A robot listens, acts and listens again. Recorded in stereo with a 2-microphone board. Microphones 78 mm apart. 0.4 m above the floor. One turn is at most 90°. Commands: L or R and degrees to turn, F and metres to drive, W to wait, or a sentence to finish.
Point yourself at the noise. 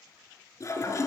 L45
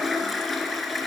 Found it: a toilet flushing, straight ahead.